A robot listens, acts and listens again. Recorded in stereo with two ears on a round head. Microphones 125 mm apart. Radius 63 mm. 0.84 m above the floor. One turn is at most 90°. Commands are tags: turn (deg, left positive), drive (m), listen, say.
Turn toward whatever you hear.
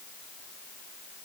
<listen/>
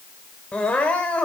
<turn deg="30"/>
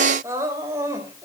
<turn deg="-20"/>
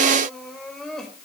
<say>Facing the crying.</say>